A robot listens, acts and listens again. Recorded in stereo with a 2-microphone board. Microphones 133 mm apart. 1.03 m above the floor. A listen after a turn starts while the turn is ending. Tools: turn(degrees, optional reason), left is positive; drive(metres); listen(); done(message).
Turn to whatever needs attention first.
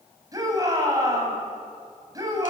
turn(degrees=-25, reason="The shout: about 25° right or 155° right.")
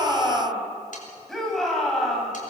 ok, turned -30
done("Found it: a shout, straight ahead.")